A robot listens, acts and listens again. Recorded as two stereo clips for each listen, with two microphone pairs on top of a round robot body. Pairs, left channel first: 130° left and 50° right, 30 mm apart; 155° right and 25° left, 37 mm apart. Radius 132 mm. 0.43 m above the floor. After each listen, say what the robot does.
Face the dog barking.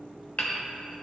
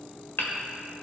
Keep listening.
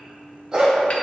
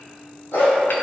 Turn 110° right.
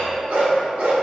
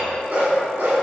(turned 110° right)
Turn 20° right.
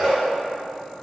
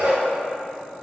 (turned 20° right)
Found it: a dog barking, straight ahead.